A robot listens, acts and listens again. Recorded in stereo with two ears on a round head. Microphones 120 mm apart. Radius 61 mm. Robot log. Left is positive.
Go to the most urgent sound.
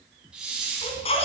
note: The baby crying: about 50° left or 130° left.
cmd yaw +50
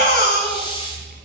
note: So it is at 85° left.
cmd yaw +85
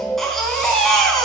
cmd fwd 1.0
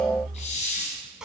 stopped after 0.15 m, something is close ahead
end: Something is in my way. I am facing the baby crying but have not reached it.